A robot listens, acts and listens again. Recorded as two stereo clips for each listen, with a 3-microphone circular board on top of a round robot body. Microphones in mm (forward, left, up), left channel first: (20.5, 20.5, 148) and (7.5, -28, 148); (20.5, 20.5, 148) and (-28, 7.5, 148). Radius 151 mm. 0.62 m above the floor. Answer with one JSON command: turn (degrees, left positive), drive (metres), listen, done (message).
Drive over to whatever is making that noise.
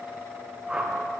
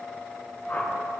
{"turn": -35}
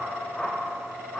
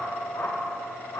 {"drive": 1.0}
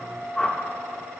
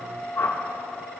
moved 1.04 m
{"drive": 1.0}
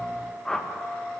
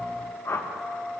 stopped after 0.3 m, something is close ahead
{"done": "Arrived at the whoosh, straight ahead."}